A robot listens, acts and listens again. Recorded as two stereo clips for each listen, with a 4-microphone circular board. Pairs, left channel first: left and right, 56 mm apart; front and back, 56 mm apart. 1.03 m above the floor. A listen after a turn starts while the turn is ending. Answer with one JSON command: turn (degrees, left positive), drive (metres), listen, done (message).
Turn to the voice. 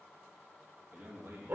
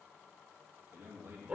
{"turn": -135}
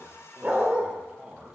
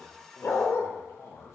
{"turn": -10}
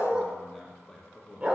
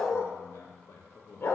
{"turn": 20}
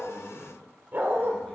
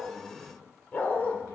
{"done": "Found it: a man speaking, straight ahead."}